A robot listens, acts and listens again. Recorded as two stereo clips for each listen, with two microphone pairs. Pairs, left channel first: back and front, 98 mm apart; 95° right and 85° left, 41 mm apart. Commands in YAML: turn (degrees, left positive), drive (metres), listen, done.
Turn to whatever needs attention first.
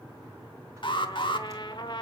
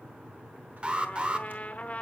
turn: 150
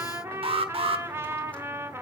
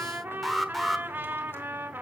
done: "Found it: an alarm, straight ahead, 1 to 2 m away."